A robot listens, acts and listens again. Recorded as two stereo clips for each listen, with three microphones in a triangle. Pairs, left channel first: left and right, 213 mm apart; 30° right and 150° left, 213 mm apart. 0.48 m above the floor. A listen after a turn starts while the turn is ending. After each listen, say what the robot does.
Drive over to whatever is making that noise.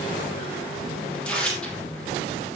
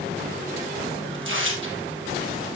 Turn 175° left.
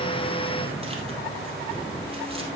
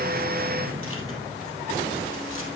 Keep listening.
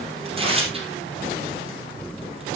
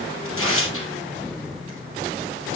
Turn 25° right.
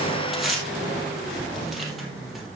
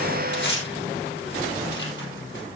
Drive 1.0 m forward.
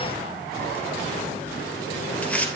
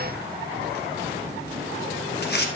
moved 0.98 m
Drive 1.0 m forward.
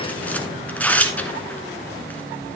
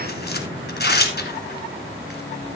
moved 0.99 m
Drive 1.0 m forward.
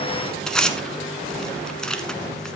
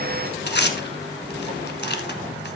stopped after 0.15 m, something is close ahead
Arrived at the tearing paper, straight ahead.